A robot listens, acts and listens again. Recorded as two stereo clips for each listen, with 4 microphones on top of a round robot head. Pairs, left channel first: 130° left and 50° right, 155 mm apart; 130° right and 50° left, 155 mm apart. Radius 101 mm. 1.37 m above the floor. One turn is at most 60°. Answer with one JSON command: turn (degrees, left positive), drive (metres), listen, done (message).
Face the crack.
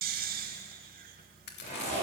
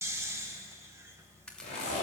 {"turn": 60}
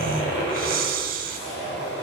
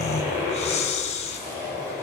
{"turn": 60}
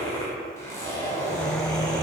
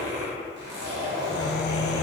{"turn": 25}
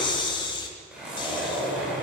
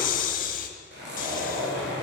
{"done": "I heard a crack from this way, but can't make it out now."}